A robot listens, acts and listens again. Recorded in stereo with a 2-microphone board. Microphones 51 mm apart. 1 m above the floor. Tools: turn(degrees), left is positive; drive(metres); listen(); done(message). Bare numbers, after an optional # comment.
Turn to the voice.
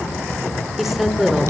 turn(30)
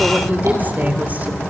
# So it is at 30° right.
turn(-30)
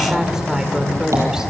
# The woman speaking is now 10° right.
turn(-10)
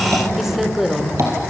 done("Found it: a woman speaking, straight ahead, 2 to 4 m away.")